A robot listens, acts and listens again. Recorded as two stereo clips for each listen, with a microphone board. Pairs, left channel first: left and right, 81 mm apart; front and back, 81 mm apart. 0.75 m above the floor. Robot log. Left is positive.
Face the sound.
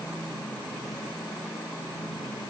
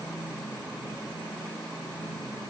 cmd idle
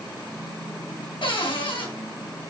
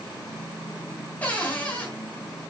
note: The cupboard door: 70° left.
cmd yaw +70
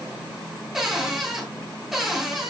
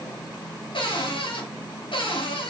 end: Facing the cupboard door, 2 to 4 m away.